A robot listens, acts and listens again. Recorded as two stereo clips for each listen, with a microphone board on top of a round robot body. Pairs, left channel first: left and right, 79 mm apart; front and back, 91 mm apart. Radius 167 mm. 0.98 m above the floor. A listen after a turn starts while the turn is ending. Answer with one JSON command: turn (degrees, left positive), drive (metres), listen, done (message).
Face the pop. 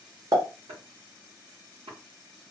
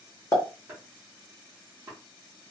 {"turn": -50}
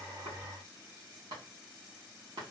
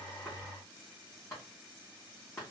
{"done": "Facing where the pop came from. I can't hear it now."}